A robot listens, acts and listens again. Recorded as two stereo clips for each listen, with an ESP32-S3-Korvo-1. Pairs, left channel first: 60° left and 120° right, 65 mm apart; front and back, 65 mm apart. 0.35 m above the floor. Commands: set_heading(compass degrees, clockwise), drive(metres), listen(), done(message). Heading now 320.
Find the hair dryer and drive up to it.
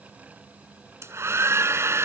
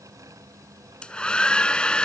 set_heading(35)
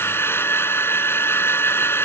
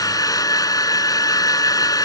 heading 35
set_heading(25)
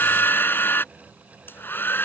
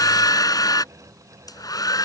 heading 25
drive(1.0)
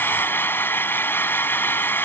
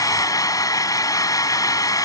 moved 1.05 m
drive(1.0)
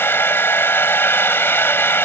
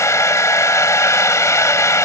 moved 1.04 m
set_heading(10)
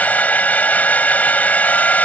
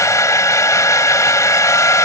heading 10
drive(1.0)
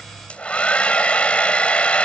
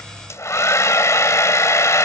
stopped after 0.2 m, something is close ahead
done("I am next to the hair dryer.")